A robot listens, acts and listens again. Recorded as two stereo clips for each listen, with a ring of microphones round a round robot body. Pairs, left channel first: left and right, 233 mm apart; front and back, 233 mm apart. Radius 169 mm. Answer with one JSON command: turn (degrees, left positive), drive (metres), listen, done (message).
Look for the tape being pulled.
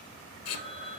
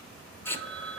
{"turn": 80}
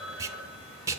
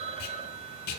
{"turn": -10}
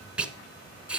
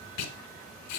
{"done": "Found it: tape being pulled, straight ahead."}